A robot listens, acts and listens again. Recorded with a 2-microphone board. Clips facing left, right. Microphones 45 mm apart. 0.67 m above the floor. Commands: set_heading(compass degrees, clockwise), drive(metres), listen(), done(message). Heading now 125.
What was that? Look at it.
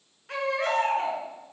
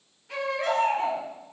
set_heading(65)
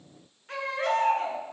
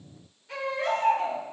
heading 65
set_heading(10)
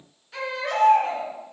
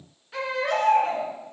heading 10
set_heading(20)
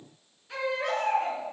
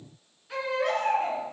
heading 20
done("Found it: a baby crying, straight ahead.")